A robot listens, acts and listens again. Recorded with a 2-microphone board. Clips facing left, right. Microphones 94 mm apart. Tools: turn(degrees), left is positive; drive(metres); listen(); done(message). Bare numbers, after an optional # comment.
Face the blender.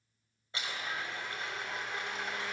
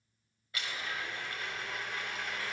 # The blender: about 25° left or 155° left.
turn(25)
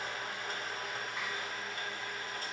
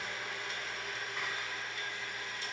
# So it is at 130° left.
turn(130)
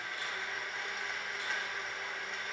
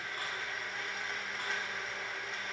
done("Found it: a blender, straight ahead, over 4 m away.")